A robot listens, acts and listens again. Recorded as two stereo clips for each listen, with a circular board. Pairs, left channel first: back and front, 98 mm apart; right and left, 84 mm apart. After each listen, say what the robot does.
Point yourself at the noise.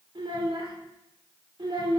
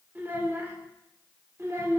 Turn 40° left.
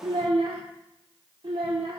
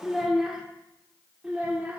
Turn 20° left.
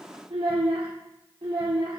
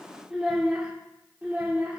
Turn 25° left.
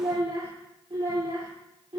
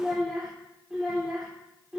Turn 10° left.
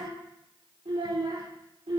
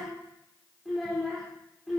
Found it: a child speaking, straight ahead, 1 to 2 m away.